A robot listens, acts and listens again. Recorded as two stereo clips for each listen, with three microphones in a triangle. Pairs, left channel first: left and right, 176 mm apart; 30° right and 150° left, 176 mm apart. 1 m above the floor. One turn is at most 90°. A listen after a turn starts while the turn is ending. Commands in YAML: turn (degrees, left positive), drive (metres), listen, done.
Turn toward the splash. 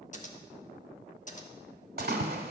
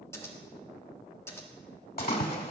turn: -65
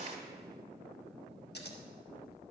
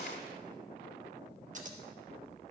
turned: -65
done: "Facing where the splash came from. I can't hear it now."